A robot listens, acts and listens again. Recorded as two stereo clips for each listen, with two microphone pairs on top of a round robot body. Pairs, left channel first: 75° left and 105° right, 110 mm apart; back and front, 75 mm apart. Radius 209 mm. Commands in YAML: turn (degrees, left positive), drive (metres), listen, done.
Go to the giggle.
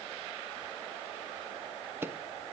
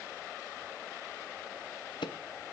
listen: true
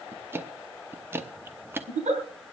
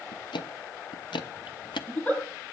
turn: -105
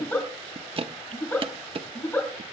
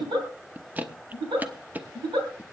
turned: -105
drive: 1.0
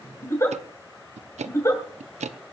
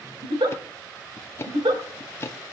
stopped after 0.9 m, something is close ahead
turn: 10
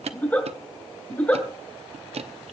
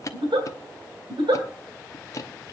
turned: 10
done: "Something is in my way. I am facing the giggle but have not reached it."